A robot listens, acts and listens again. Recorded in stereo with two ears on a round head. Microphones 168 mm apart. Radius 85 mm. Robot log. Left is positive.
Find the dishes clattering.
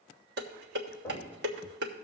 note: The dishes clattering: about 65° right or 115° right.
cmd yaw -65
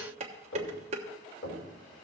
note: So it is at 40° right.
cmd yaw -40
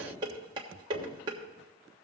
note: The dishes clattering is now 25° right.
cmd yaw -25
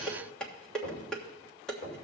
end: Found it: dishes clattering, straight ahead.